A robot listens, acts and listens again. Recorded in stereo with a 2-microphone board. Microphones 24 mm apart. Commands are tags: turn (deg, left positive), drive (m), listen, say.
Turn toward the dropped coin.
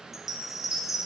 <listen/>
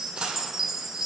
<turn deg="-40"/>
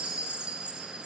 <listen/>
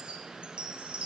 <say>I heard a dropped coin, but can't make it out now. It was about straight ahead or 100° right.</say>